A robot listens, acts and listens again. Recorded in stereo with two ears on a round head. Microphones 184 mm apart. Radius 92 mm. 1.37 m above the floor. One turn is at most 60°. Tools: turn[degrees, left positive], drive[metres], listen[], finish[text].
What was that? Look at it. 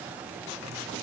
Action: listen[]
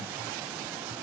Action: listen[]
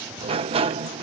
Thought: The sliding door: about 30° right or 150° right.
Action: turn[-30]
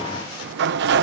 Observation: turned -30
Thought: So it is at 120° right.
Action: turn[-60]
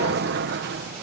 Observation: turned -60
Thought: The sliding door is now 55° right.
Action: turn[-55]
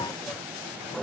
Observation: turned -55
Action: finish[Found it: a sliding door, straight ahead.]